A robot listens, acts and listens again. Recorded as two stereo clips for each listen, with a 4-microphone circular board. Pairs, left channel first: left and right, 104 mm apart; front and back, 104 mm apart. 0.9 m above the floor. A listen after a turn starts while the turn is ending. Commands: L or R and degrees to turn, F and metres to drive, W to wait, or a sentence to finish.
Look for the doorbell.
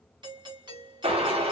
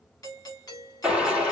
R55
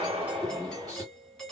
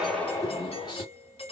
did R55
Facing the doorbell, 1 to 2 m away.